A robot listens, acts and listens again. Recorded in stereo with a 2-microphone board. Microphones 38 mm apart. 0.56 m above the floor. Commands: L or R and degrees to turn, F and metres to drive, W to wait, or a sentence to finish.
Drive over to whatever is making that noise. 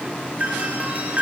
R45
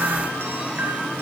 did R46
W
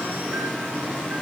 W
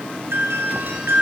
R90
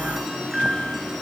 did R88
F1.0
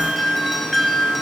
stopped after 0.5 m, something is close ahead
Blocked. The doorbell is further on, straight ahead.